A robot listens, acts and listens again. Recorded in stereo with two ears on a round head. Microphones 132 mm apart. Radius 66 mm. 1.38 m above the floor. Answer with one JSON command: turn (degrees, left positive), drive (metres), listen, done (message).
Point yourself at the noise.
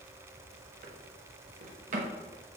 {"turn": -55}
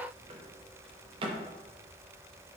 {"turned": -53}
{"turn": -45}
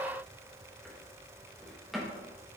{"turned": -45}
{"done": "Facing the drawer, under 1 m away."}